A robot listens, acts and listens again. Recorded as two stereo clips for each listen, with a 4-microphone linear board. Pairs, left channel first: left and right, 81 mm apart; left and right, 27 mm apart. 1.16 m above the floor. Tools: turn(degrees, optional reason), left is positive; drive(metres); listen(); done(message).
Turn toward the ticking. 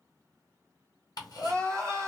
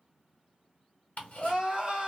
turn(degrees=55, reason="The ticking: about 55° left or 125° left.")
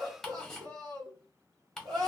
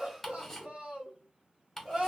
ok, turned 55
done("Facing the ticking, 1 to 2 m away.")